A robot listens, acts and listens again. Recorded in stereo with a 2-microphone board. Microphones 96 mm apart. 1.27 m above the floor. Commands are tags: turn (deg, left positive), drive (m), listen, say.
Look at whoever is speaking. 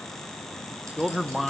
<turn deg="30"/>
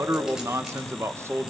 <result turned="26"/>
<turn deg="-30"/>
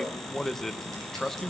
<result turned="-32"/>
<say>Found it: a man speaking, straight ahead.</say>